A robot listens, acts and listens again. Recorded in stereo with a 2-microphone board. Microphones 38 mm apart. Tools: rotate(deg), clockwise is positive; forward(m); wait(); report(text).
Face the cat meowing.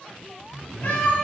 rotate(-65)
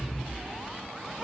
report("Facing the cat meowing, 1 to 2 m away.")